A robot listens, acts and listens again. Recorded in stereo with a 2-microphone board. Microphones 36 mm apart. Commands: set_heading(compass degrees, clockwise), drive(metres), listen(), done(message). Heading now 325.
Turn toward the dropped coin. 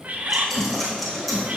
set_heading(295)
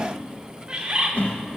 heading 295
listen()
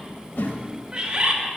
done("I heard a dropped coin, but can't make it out now. It was about 25° right or 145° left.")